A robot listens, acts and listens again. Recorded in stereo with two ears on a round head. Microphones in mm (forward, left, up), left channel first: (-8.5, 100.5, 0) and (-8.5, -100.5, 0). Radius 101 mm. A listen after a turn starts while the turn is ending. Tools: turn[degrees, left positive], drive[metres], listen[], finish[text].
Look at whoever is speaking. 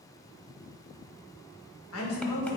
Thought: The woman speaking: about 70° left or 110° left.
Action: turn[70]
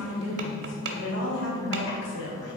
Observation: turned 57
Thought: So it is at 60° left.
Action: turn[60]
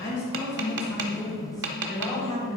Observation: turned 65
Action: finish[Found it: a woman speaking, straight ahead, 2 to 4 m away.]